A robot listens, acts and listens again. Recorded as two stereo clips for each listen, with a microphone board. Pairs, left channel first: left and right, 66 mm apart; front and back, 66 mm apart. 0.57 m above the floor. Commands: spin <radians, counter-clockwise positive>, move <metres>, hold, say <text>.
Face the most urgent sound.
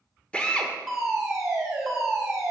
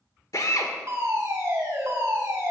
spin -3.05
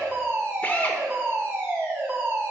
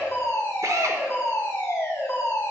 spin -0.79
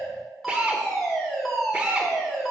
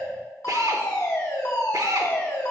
say Facing the fire alarm.